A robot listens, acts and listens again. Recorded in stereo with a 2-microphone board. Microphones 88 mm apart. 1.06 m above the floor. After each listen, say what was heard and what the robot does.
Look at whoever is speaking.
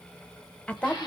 Turn 30° left.
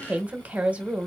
So it is at 15° right. Turn 15° right.
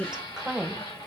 The woman speaking is now 10° right. Turn 10° right.
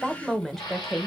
Found it: a woman speaking, straight ahead, under 1 m away.